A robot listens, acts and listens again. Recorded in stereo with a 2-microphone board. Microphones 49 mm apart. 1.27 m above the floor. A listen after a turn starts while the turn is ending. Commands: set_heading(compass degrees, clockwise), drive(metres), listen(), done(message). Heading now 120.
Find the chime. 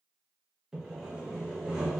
listen()
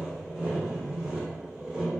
listen()
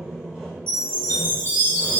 set_heading(175)
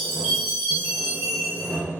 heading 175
done("Found it: a chime, straight ahead, 1 to 2 m away.")